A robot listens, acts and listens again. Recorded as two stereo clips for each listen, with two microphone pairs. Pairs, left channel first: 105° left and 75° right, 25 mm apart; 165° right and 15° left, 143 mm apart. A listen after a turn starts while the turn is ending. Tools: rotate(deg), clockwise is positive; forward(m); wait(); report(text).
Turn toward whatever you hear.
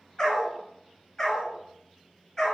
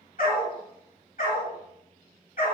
rotate(-170)
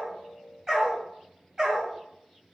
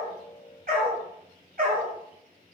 report("Found it: a dog barking, straight ahead, over 4 m away.")